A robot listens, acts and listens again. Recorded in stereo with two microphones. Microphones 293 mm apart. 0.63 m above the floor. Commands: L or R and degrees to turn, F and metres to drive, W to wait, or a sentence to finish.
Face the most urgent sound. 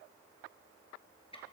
W
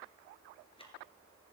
W
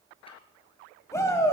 L30
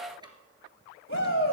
L135
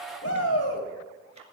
L50
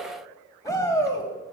L10
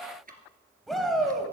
Facing the shout.